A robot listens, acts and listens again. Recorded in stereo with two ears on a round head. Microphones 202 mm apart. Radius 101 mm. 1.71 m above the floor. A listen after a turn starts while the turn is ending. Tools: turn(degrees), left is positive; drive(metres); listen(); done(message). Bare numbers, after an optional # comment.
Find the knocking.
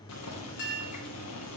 listen()
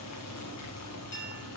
listen()
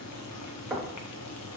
turn(-30)
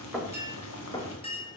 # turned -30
# So it is at 20° left.
turn(20)
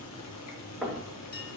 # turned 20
done("Facing the knocking.")